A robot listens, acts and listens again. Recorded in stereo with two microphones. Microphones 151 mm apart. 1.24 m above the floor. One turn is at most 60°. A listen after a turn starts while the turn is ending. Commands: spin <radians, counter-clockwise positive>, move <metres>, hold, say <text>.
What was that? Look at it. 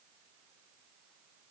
hold
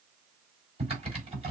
spin -0.70
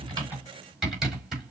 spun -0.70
say Found it: typing on a keyboard, straight ahead.